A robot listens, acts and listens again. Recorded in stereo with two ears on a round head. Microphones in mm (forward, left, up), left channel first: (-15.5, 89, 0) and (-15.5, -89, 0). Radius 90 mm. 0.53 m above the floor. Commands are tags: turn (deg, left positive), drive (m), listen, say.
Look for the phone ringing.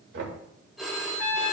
<turn deg="30"/>
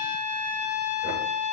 <listen/>
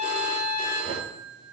<turn deg="-30"/>
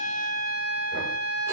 <listen/>
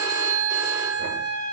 <turn deg="-15"/>
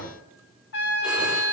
<listen/>
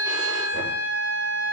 <listen/>
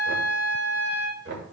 <say>I heard a phone ringing from this way, but can't make it out now.</say>